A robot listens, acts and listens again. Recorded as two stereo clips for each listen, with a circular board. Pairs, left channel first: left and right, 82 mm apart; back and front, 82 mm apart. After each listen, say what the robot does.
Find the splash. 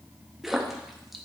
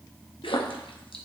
Turn 180° left.
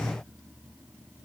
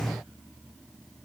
Facing where the splash came from. I can't hear it now.